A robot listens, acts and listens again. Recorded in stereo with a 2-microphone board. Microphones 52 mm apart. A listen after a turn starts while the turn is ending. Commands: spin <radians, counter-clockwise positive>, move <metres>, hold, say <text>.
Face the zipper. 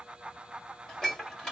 hold
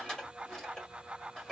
hold
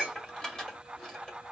say I can't make out a zipper to turn to.